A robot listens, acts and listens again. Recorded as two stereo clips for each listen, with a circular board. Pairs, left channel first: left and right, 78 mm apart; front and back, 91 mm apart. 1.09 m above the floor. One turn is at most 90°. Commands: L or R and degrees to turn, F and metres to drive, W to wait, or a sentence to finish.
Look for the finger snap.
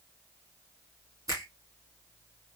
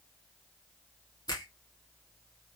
R40
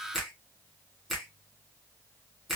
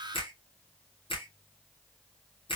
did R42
Facing the finger snap, 1 to 2 m away.